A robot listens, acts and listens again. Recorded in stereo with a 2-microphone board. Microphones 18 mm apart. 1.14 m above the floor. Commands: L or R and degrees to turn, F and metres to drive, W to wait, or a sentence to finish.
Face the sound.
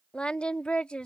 L75
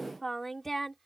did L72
L15
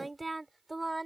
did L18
Facing the singing.